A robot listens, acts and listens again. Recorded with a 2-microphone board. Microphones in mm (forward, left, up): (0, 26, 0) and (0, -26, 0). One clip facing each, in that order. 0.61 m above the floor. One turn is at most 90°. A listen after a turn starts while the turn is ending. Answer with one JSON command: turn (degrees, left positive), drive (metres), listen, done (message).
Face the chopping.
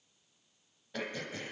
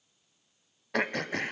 {"listen": true}
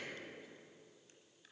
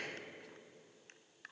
{"listen": true}
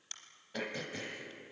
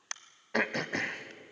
{"done": "I can't make out chopping to turn to."}